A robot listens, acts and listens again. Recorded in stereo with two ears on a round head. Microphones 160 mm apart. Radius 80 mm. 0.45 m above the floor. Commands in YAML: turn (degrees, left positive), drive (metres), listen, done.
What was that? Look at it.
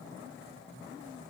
listen: true
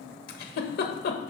turn: 60
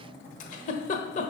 turn: 50
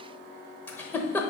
turn: 15
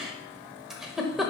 done: "Found it: a giggle, straight ahead, 1 to 2 m away."